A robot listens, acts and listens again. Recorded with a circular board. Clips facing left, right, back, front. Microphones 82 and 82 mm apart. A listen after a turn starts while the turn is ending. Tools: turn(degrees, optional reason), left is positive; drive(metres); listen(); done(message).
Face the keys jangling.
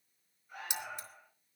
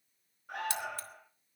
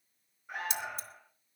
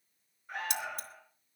turn(degrees=20, reason="The keys jangling: 20° left.")
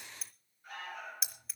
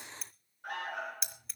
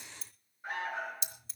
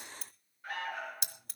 done("Facing the keys jangling.")